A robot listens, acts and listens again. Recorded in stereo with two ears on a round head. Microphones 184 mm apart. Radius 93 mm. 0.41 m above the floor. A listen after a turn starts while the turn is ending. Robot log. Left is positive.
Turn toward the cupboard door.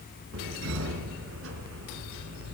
note: The cupboard door: about 65° right or 115° right.
cmd yaw -65
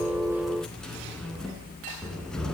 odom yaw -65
end: Facing the cupboard door.